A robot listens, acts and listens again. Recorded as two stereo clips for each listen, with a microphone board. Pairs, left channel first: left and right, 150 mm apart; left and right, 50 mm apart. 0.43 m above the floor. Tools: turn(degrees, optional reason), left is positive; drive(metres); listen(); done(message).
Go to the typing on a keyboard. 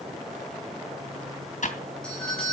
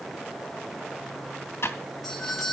turn(degrees=60, reason="The typing on a keyboard: about 60° left or 120° left.")
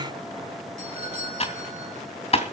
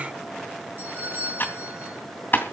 turn(degrees=50, reason="So it is at 50° left.")
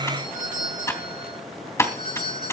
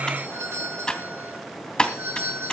turn(degrees=20, reason="The typing on a keyboard is now 20° left.")
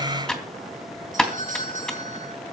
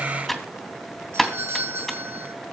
drive(metres=1.0)
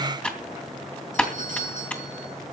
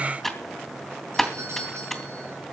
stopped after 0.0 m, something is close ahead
turn(degrees=10, reason="The typing on a keyboard is now 10° left.")
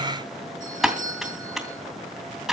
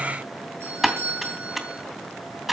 done("Blocked. The typing on a keyboard is further on, straight ahead.")